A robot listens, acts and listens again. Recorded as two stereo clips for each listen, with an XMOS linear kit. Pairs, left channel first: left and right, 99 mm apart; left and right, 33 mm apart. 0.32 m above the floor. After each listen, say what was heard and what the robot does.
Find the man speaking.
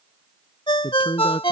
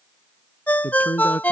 The man speaking: about 60° left or 120° left. Turn 60° left.
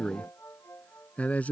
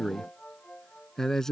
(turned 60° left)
So it is at 15° left. Turn 15° left.
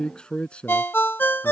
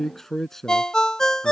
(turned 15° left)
The man speaking is now 10° left. Turn 10° left.
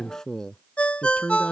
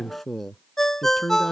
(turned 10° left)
The man speaking is now 10° left. Turn 10° left.
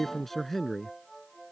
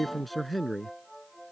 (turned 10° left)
Found it: a man speaking, straight ahead.